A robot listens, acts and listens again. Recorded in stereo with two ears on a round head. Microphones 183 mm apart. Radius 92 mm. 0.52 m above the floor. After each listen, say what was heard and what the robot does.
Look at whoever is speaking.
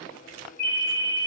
Keep listening.
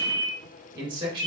The man speaking: about 25° right or 155° right. Turn 25° right.
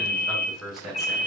Found it: a man speaking, straight ahead.